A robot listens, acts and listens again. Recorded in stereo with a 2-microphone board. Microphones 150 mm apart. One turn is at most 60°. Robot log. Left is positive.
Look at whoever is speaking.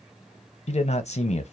note: The man speaking: about 50° left or 130° left.
cmd yaw +50
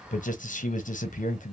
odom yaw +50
note: So it is at 80° left.
cmd yaw +60
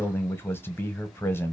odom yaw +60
note: The man speaking is now 15° left.
cmd yaw +15
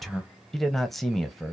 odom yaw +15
end: Facing the man speaking.